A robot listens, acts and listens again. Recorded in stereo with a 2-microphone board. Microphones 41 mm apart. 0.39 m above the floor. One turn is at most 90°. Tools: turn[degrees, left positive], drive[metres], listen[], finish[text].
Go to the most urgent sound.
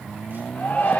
Thought: The shout: about 40° left or 140° left.
Action: turn[40]
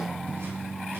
Action: listen[]
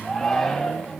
Action: drive[1.0]
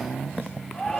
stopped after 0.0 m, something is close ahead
Thought: The shout is now 10° left.
Action: turn[10]
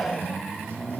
Action: finish[Something is in my way. I am facing the shout but have not reached it.]